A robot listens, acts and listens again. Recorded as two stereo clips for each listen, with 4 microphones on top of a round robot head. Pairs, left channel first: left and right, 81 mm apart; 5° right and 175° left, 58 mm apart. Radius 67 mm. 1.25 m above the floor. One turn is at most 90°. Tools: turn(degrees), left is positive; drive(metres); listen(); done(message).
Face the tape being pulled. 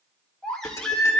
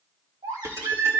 listen()
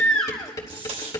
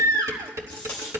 turn(degrees=-75)
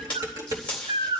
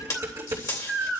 turn(degrees=10)
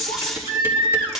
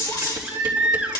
done("Facing the tape being pulled, 2 to 4 m away.")